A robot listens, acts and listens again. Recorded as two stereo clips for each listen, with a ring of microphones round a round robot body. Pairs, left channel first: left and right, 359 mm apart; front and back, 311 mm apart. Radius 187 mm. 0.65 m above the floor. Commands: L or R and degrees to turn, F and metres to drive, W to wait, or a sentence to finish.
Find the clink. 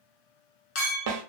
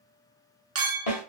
L140
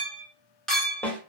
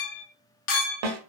Facing the clink, under 1 m away.